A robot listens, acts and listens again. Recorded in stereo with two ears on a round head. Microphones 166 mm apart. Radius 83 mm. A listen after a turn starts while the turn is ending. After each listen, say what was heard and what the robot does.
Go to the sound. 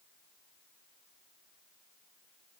Keep listening.
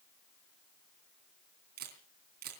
The camera shutter: about 55° right or 125° right. Turn 55° right.
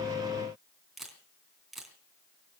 Drive 1.0 m forward.
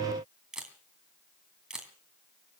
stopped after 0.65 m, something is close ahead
Blocked. The camera shutter is further on, straight ahead.